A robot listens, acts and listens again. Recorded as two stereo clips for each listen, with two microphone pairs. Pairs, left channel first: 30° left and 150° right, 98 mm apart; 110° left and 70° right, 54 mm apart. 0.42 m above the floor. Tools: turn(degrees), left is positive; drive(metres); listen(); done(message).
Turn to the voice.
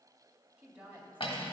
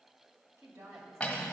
turn(degrees=-75)
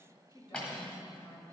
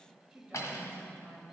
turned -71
done("Found it: a woman speaking, straight ahead, 1 to 2 m away.")